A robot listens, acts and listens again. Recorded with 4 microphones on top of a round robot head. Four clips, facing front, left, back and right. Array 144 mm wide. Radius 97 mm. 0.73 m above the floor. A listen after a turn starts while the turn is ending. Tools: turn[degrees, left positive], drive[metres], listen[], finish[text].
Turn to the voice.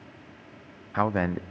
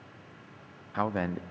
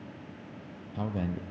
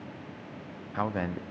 Action: finish[Facing the man speaking.]